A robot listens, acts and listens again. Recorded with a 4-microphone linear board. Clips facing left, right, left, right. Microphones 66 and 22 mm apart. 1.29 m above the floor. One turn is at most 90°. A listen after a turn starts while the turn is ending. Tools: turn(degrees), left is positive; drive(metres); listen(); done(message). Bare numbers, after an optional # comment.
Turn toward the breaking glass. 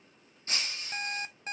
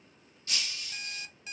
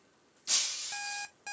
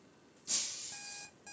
# The breaking glass: about 35° left or 145° left.
turn(35)
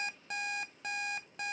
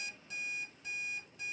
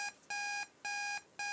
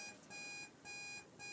listen()
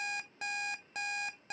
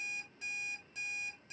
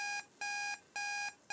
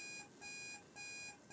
done("I heard breaking glass, but can't make it out now. It was about straight ahead or 110° left.")